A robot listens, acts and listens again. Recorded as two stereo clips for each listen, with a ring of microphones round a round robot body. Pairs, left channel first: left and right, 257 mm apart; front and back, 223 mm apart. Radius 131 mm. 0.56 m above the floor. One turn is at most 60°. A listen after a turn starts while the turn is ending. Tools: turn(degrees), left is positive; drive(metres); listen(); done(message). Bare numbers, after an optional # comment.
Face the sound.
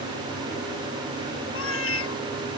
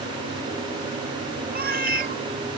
# The cat meowing: 130° left.
turn(60)
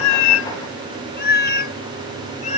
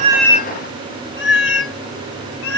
# The cat meowing is now 25° left.
turn(25)
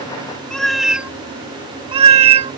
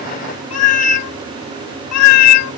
# The cat meowing is now 20° right.
turn(-20)
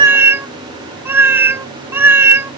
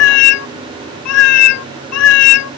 # The cat meowing is now 10° right.
turn(-10)
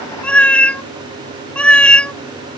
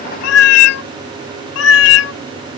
done("Facing the cat meowing.")